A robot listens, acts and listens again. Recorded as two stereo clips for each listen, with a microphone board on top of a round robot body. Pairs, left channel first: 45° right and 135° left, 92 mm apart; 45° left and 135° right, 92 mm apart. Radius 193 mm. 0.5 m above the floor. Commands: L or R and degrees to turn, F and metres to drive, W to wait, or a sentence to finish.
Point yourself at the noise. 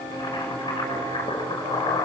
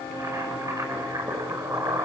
R85
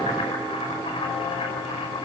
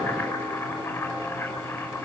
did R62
R25
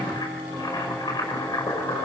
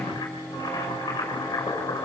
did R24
Found it: boiling, straight ahead.